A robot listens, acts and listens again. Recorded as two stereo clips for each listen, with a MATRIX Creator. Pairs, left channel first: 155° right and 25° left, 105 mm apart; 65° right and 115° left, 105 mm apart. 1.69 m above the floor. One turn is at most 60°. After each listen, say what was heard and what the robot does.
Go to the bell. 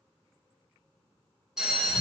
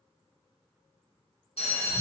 The bell: 60° right. Turn 60° right.
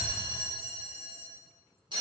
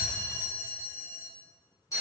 The bell is now 10° right. Turn 10° right.
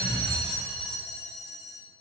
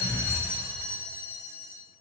Drive 1.0 m forward.
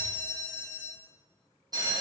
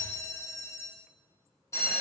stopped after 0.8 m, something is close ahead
The bell is now 15° right. Turn 15° right.
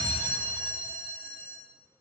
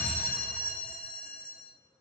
Arrived at the bell, straight ahead.